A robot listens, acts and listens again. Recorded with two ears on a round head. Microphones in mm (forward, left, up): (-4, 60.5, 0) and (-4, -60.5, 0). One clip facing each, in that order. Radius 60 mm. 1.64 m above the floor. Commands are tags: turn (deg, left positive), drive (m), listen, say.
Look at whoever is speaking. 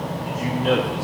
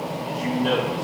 <turn deg="30"/>
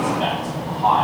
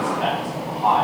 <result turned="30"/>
<turn deg="150"/>
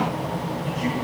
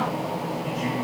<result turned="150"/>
<listen/>
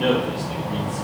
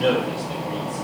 <say>Facing the man speaking, 2 to 4 m away.</say>